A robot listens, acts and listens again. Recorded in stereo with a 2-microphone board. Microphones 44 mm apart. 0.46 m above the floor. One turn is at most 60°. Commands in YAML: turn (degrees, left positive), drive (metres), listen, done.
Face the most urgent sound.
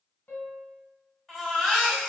turn: 30
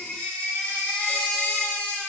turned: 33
turn: 60
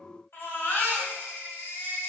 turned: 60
turn: 60
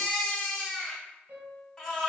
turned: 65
turn: 10
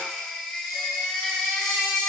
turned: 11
done: "Facing the baby crying."